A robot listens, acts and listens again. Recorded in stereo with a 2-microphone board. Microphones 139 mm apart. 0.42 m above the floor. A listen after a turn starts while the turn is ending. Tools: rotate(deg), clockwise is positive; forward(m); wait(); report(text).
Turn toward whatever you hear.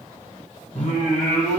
rotate(-55)
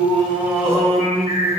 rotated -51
report("Found it: singing, straight ahead, 2 to 4 m away.")